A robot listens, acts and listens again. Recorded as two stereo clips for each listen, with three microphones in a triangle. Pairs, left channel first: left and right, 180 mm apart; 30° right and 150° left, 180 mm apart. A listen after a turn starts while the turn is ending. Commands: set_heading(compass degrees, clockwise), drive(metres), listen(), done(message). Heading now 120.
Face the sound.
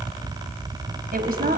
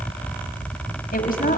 set_heading(180)
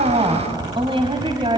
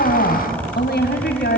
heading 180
set_heading(210)
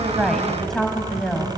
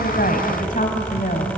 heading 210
done("Facing the woman speaking, 2 to 4 m away.")